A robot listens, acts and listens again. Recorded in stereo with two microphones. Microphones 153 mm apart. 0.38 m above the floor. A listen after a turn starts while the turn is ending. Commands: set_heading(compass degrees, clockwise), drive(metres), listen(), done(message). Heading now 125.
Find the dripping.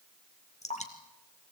set_heading(75)
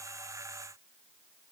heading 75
listen()
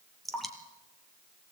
done("Facing the dripping, 2 to 4 m away.")